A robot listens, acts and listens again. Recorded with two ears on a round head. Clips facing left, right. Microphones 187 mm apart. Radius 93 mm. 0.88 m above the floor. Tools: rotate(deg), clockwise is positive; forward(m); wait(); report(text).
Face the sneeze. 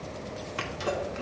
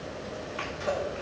rotate(-55)
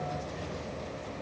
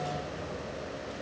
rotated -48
wait()
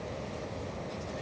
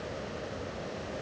report("I heard a sneeze, but can't make it out now. It was about 10° left or 75° left.")